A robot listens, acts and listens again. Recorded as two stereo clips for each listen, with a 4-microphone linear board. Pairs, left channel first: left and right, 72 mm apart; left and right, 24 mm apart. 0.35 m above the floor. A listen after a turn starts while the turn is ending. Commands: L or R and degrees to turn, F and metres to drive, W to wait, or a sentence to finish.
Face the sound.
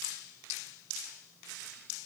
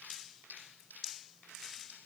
W
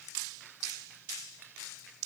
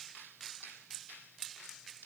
W
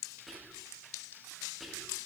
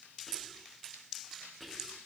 L30
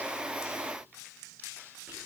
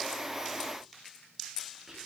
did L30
W
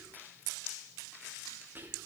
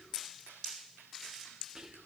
R30
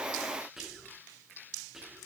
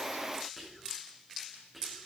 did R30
Facing the whispering, over 4 m away.